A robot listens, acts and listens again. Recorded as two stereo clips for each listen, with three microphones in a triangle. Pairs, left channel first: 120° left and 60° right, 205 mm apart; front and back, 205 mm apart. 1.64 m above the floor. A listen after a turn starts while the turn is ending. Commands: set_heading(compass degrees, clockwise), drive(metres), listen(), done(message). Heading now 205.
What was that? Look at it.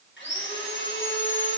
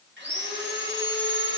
set_heading(55)
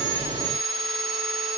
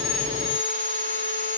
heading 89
set_heading(59)
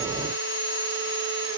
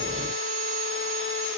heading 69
set_heading(59)
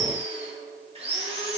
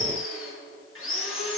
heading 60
done("Found it: sawing, straight ahead, 1 to 2 m away.")